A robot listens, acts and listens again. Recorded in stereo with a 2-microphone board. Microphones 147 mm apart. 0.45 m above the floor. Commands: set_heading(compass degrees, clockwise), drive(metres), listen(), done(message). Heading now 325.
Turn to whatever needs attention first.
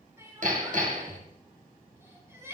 set_heading(340)
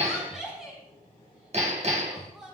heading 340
done("Facing the crying, over 4 m away.")